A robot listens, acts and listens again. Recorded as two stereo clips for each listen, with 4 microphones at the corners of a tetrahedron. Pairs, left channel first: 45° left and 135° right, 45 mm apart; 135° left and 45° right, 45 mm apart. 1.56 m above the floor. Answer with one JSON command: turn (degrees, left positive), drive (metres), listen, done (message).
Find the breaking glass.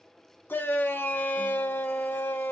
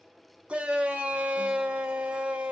{"listen": true}
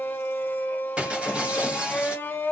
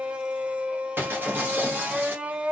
{"turn": -75}
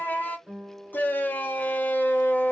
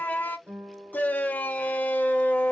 {"done": "I heard breaking glass from this way, but can't make it out now."}